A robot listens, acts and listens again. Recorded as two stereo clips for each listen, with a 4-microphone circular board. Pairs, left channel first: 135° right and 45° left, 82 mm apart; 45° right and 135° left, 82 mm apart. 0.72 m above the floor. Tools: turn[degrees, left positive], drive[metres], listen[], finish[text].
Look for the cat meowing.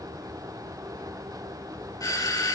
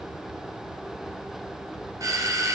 Action: listen[]
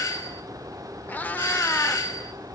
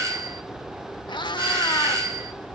Thought: The cat meowing: 65° right.
Action: turn[-65]
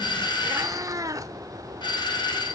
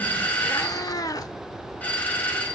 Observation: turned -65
Action: finish[Facing the cat meowing.]